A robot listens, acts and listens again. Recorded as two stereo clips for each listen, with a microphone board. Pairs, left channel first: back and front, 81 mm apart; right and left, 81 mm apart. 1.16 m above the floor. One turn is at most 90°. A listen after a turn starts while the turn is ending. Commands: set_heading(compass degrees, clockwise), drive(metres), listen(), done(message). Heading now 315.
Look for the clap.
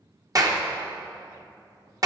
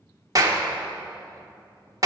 set_heading(270)
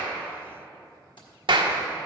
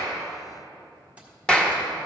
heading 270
set_heading(285)
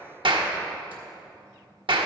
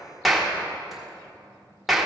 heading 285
done("Facing the clap.")